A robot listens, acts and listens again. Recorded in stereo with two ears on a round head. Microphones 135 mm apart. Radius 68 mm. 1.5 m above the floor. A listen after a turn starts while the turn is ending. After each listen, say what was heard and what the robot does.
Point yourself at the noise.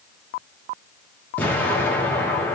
Turn 30° left.
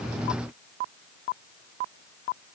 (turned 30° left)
Keep listening.
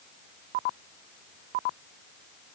I heard an explosion, but can't make it out now. It was about 20° right or 140° left.